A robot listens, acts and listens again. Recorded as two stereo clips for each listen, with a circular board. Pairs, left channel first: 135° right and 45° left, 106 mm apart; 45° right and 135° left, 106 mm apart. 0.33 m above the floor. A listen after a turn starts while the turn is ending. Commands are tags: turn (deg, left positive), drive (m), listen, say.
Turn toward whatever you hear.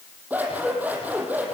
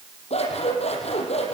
<turn deg="-30"/>
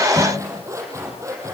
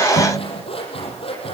<turn deg="-15"/>
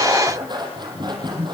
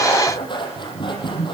<say>Found it: scissors, straight ahead.</say>